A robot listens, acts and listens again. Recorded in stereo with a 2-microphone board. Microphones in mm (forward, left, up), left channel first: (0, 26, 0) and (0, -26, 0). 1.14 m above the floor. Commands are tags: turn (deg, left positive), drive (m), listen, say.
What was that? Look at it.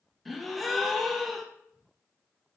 <turn deg="30"/>
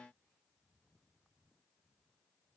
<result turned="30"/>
<listen/>
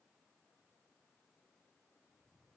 <say>I heard a gasp, but can't make it out now. It was about 30° right or 150° left.</say>